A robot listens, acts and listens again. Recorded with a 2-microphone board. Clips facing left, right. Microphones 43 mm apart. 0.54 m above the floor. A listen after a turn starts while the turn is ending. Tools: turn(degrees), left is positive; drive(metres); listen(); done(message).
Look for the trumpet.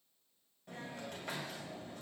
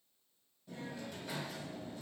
listen()
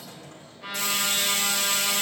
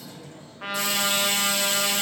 turn(degrees=-90)
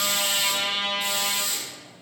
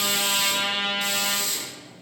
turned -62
turn(degrees=-35)
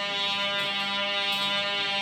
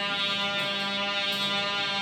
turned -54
turn(degrees=20)
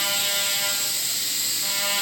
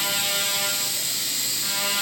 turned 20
done("Found it: a trumpet, straight ahead, 1 to 2 m away.")